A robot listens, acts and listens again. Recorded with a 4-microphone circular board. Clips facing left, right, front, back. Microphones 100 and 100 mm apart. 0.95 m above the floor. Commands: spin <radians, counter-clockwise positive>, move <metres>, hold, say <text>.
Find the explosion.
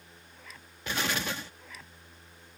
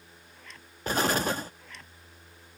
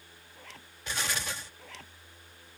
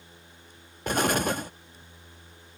spin -2.44
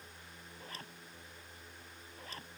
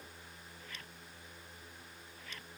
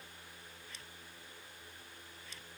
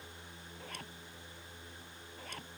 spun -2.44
say Facing where the explosion came from. I can't hear it now.